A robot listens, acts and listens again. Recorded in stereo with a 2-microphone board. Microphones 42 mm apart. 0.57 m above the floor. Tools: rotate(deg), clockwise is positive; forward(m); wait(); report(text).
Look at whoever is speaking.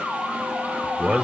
rotate(30)
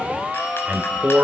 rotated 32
rotate(135)
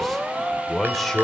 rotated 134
report("Facing the man speaking, 2 to 4 m away.")